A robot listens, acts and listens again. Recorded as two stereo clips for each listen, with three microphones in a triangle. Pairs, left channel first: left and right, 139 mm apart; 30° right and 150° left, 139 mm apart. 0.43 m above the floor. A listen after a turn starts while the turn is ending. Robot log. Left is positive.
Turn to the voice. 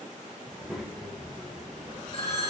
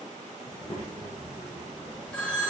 end: Found it: a child speaking, straight ahead.